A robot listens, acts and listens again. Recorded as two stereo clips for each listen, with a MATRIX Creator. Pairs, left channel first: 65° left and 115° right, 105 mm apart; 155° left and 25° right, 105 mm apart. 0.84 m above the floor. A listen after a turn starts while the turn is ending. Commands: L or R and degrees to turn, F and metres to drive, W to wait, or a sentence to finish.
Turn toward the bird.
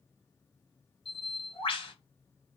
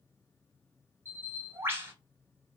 L45
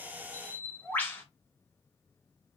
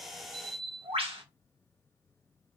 Facing the bird, 2 to 4 m away.